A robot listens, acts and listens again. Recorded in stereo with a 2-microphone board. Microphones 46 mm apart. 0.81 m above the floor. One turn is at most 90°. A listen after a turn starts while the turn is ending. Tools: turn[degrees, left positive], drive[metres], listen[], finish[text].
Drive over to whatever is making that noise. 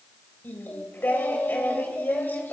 Thought: The singing: about 50° left or 130° left.
Action: turn[50]
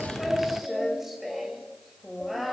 Action: drive[1.0]
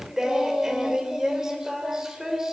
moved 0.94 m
Thought: The singing is now 10° right.
Action: turn[-10]
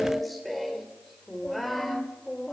Action: drive[1.0]
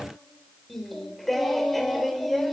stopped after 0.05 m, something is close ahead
Action: finish[Something is in my way. I am facing the singing but have not reached it.]